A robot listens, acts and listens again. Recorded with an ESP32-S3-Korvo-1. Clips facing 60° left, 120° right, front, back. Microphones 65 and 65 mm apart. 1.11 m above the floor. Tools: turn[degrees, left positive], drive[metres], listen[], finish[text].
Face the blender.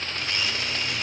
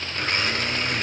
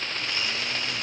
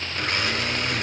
Thought: The blender: 155° right.
Action: turn[-155]
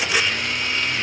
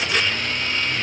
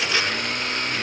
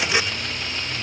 Thought: The blender is now 20° right.
Action: turn[-20]
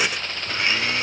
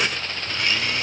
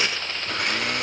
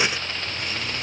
Action: finish[Facing the blender, 2 to 4 m away.]